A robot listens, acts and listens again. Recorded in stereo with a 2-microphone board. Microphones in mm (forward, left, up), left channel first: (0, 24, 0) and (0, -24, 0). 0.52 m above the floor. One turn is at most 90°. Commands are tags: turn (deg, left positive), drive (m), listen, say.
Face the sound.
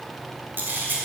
<turn deg="-45"/>
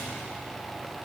<listen/>
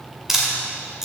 <turn deg="-10"/>
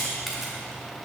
<listen/>
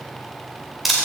<say>Facing the camera shutter, 2 to 4 m away.</say>